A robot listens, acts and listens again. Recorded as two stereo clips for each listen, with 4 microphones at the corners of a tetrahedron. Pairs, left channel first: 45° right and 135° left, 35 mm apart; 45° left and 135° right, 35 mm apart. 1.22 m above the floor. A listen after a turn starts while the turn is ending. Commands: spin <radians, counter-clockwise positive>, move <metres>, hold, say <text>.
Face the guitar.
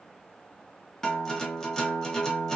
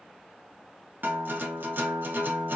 spin -2.09
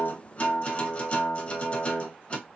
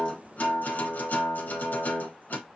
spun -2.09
spin 0.17
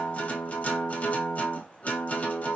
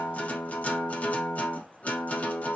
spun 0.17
say Facing the guitar.